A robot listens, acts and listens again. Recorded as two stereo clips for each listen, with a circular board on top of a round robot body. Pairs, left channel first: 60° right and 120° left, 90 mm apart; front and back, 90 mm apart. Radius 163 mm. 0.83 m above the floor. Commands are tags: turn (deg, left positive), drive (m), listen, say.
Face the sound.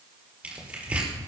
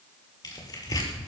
<turn deg="45"/>
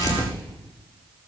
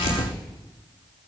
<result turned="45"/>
<turn deg="-10"/>
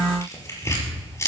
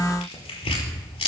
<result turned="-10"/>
<say>Found it: tearing paper, straight ahead.</say>